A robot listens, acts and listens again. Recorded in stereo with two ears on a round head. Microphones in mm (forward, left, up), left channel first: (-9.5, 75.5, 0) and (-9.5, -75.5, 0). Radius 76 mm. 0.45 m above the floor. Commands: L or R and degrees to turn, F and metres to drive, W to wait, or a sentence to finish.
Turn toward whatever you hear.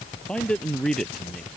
L30
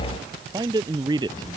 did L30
R25
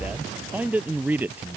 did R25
R10
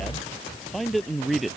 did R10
Found it: a man speaking, straight ahead.